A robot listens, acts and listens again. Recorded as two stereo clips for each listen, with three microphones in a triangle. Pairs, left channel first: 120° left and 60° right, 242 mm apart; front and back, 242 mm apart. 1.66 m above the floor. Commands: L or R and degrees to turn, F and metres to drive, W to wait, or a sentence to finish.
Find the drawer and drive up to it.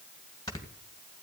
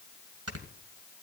W
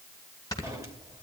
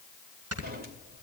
R135
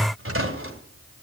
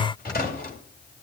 R45
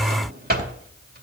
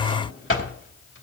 R15
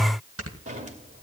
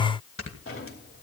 F1.0
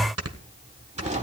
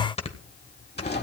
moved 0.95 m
R10
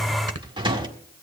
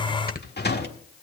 F1.0
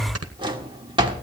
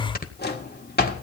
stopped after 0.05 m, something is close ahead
Arrived at the drawer, straight ahead.